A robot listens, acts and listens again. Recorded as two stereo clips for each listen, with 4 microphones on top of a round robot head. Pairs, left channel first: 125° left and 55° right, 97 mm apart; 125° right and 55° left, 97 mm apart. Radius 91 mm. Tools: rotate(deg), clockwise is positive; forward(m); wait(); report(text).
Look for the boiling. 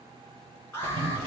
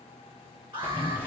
rotate(20)
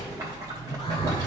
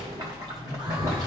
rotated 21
report("Facing the boiling, 2 to 4 m away.")